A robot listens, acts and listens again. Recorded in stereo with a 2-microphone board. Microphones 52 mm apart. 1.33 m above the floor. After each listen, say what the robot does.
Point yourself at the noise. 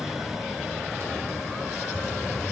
Turn 55° right.
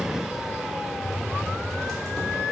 Found it: typing on a keyboard, straight ahead.